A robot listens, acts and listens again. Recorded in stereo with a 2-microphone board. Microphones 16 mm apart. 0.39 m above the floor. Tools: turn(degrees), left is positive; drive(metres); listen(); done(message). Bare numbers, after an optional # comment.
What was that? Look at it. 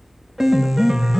# The piano: about 25° right or 155° right.
turn(-25)
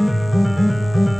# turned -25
done("Facing the piano, under 1 m away.")